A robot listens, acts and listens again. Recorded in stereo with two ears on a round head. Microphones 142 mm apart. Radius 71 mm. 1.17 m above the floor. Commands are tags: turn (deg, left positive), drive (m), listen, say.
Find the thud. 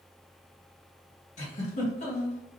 <listen/>
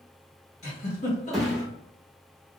<turn deg="30"/>
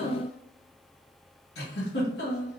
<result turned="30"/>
<listen/>
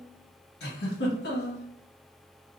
<say>I heard a thud, but can't make it out now. It was about 30° right or 150° left.</say>